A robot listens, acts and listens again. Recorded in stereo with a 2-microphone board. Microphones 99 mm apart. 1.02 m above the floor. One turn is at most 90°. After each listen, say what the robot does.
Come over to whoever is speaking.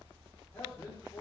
Turn 25° left.
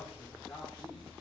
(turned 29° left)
Drive 1.0 m forward.
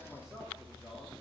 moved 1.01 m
Drive 1.0 m forward.
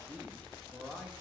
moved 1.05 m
Turn 15° right.
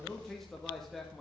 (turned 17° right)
Drive 1.0 m forward.
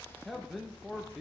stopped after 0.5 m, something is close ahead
I am next to the man speaking.